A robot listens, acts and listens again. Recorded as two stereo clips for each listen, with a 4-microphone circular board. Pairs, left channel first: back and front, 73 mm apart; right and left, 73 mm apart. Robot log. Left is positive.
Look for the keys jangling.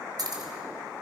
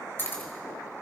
note: The keys jangling: 30° right.
cmd yaw -30
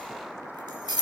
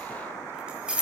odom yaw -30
note: The keys jangling is now 15° left.
cmd yaw +15
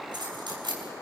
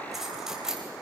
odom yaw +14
end: Facing the keys jangling.